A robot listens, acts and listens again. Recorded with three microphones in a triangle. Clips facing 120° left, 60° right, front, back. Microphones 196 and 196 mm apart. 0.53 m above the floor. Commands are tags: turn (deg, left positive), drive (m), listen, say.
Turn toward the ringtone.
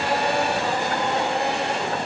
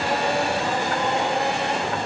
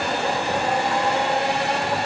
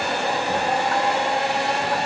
<listen/>
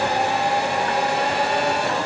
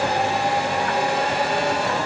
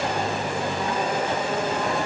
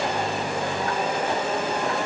<listen/>
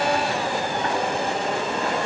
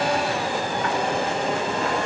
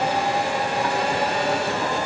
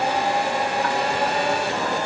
<say>I can't make out a ringtone to turn to.</say>